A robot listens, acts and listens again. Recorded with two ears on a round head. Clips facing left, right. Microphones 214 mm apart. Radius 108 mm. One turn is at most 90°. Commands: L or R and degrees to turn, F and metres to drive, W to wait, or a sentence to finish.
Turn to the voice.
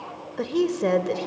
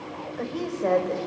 L50
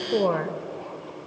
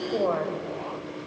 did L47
L75
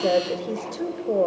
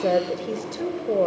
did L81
Found it: a woman speaking, straight ahead, 1 to 2 m away.